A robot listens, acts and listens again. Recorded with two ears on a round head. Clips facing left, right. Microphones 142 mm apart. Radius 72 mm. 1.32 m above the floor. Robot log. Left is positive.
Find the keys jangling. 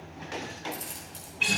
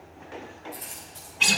note: The keys jangling: about 65° left or 115° left.
cmd yaw +65
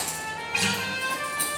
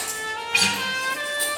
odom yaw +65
note: So it is at 10° left.
cmd yaw +10
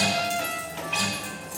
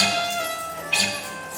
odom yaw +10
note: The keys jangling is now 10° left.
cmd yaw +10
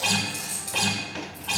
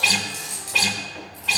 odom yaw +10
end: Found it: keys jangling, straight ahead, over 4 m away.